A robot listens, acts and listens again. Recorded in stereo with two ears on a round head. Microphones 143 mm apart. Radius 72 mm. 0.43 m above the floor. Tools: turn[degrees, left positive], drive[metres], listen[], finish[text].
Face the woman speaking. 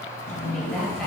Action: turn[30]
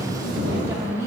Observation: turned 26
Thought: So it is at 25° right.
Action: turn[-25]
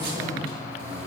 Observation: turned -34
Thought: Nothing new. It was at 10° left.
Action: turn[10]
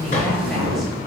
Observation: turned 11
Action: listen[]
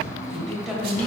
Action: finish[Found it: a woman speaking, straight ahead.]